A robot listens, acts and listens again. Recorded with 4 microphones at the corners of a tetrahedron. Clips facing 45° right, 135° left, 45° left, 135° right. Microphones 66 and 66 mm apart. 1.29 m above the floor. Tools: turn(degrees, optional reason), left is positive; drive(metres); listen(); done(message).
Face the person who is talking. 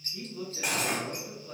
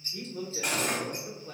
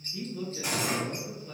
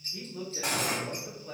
turn(degrees=180, reason="The man speaking: straight behind.")
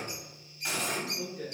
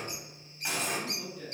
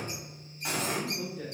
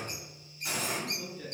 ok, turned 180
turn(degrees=10, reason="The man speaking is now 10° left.")
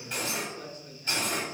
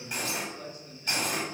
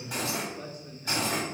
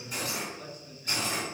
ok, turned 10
done("Facing the man speaking, 1 to 2 m away.")